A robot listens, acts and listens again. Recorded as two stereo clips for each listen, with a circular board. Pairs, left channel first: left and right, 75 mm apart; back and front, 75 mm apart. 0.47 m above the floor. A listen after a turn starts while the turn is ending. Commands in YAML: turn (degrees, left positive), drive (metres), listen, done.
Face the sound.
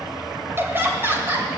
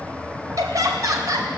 turn: -35
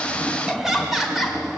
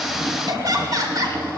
done: "Facing the laughter."